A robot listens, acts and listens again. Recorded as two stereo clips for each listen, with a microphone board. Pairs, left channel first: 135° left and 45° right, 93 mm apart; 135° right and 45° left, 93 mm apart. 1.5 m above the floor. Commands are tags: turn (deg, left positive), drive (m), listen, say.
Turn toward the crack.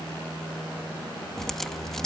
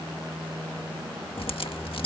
<turn deg="-140"/>
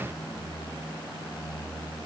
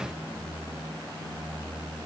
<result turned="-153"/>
<turn deg="15"/>
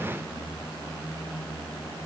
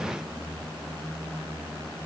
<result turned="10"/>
<say>Facing where the crack came from. I can't hear it now.</say>